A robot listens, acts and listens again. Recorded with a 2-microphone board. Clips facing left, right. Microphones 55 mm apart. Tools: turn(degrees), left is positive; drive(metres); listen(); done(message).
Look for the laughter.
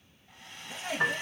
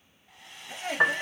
turn(degrees=-60)
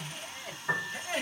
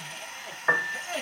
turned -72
turn(degrees=10)
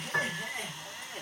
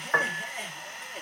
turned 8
done("Facing the laughter.")